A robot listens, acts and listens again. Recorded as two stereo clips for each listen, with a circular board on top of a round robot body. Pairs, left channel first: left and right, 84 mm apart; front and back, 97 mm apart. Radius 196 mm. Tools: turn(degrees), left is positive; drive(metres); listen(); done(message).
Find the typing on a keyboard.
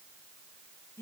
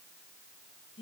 listen()
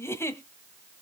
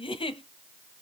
listen()
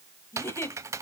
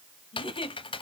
turn(degrees=-35)
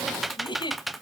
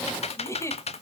done("Facing the typing on a keyboard, under 1 m away.")